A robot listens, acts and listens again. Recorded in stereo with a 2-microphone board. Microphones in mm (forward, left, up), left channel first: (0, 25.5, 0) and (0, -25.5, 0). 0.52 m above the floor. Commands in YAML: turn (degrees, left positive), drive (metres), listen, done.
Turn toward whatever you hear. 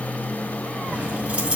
turn: -20
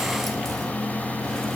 listen: true
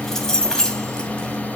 turn: 15
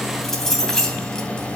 turn: 10
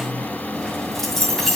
done: "Found it: keys jangling, straight ahead."